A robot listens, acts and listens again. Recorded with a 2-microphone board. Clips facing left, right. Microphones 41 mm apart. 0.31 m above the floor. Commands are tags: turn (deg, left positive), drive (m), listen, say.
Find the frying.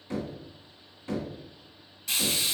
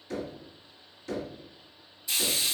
<turn deg="75"/>
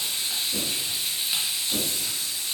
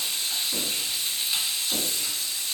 <turn deg="20"/>
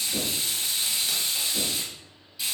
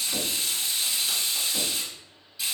<say>Facing the frying.</say>